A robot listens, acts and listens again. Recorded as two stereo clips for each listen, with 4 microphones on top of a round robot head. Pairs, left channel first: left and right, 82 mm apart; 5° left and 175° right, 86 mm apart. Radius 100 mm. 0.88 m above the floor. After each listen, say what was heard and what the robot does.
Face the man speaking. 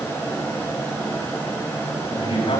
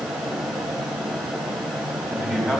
The man speaking: 110° left. Turn 110° left.
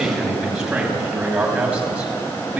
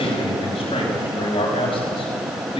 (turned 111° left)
The man speaking is now 10° right. Turn 10° right.
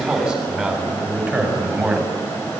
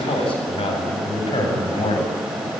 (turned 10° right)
The man speaking is now 10° right. Turn 10° right.
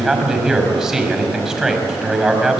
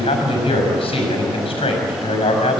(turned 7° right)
Found it: a man speaking, straight ahead, over 4 m away.